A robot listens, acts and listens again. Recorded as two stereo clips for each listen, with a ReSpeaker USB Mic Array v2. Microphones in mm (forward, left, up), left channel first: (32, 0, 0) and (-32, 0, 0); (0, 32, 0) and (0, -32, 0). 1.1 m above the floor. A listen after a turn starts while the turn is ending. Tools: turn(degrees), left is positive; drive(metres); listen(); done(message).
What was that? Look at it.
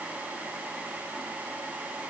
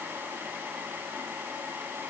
listen()
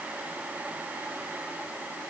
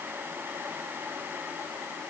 listen()
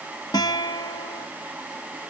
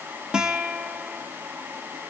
turn(degrees=-10)
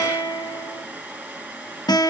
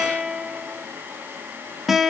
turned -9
done("Found it: a guitar, straight ahead, 1 to 2 m away.")